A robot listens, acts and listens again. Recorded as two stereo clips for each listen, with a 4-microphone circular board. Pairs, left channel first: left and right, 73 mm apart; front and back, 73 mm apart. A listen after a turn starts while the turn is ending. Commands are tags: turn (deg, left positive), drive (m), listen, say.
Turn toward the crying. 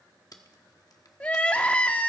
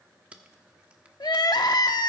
<turn deg="20"/>
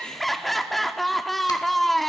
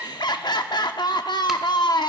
<say>Found it: crying, straight ahead.</say>